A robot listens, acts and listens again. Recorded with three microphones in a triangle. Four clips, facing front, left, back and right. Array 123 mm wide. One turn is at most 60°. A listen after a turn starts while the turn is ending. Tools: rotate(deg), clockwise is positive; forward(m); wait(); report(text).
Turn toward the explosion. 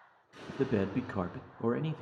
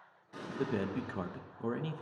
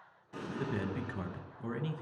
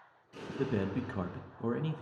rotate(-60)
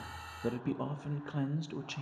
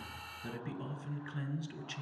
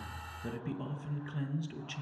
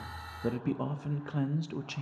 rotate(-60)
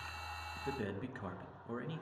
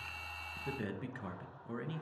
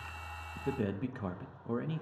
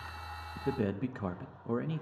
rotate(-35)
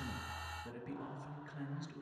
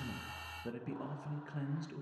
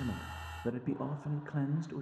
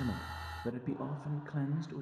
report("Facing where the explosion came from. I can't hear it now.")